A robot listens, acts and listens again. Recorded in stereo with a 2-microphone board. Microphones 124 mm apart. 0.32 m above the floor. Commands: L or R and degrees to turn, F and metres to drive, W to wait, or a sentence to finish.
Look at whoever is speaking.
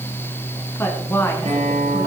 L20
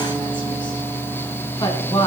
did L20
L140
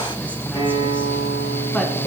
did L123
L15
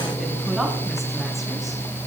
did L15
W
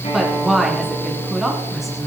Found it: a woman speaking, straight ahead.